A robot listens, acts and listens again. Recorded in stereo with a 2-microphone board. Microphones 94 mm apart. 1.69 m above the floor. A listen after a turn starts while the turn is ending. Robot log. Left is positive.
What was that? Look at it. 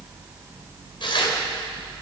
note: The tearing paper: about 60° left or 120° left.
cmd yaw +60
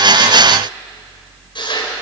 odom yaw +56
note: So it is at 60° left.
cmd yaw +60
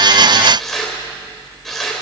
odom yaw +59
end: Found it: tearing paper, straight ahead, over 4 m away.